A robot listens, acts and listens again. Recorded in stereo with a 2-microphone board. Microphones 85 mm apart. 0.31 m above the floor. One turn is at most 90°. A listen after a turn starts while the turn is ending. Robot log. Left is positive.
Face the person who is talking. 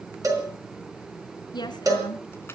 note: The woman speaking: about 60° left or 120° left.
cmd yaw +60
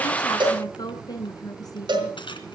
note: So it is at 55° left.
cmd yaw +55
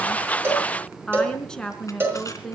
note: The woman speaking is now 10° left.
cmd yaw +10
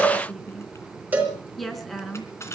end: Facing the woman speaking.